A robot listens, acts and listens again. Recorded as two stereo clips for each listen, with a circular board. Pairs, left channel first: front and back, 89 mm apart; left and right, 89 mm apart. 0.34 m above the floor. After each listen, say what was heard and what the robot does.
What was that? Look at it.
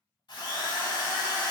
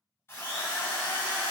The drill: 25° left. Turn 25° left.
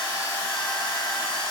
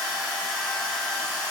Facing the drill, 1 to 2 m away.